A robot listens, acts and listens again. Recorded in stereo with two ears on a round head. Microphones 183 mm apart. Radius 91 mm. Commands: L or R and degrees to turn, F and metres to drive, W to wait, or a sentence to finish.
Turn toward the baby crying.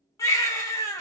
L30
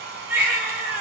R15
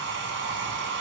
W
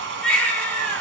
Found it: a baby crying, straight ahead, 1 to 2 m away.